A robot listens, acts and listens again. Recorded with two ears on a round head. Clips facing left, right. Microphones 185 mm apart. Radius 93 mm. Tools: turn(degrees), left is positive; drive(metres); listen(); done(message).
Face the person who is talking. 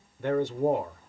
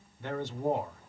turn(degrees=45)
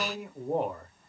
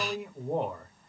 done("Facing the man speaking, 1 to 2 m away.")